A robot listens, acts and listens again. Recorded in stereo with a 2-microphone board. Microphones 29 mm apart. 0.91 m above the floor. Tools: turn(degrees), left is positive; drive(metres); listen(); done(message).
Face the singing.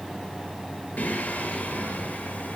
turn(degrees=65)
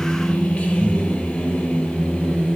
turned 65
turn(degrees=35)
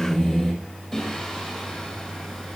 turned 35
done("Facing the singing.")